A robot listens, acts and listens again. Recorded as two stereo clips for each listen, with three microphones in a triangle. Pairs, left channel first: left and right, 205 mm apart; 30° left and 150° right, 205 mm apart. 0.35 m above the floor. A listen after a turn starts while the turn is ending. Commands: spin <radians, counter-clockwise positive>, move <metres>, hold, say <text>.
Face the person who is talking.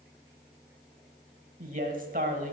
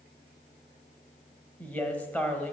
spin -0.96
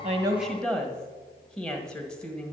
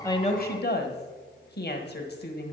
say Found it: a woman speaking, straight ahead, 1 to 2 m away.